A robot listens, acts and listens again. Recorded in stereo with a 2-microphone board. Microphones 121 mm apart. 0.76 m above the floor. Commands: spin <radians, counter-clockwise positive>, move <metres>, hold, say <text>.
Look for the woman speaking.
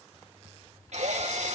hold
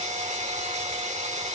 hold
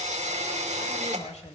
spin 1.13
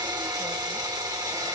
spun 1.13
hold
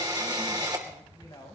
spin 0.61
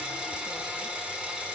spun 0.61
hold
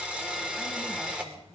hold
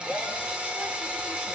say Facing where the woman speaking came from. I can't hear it now.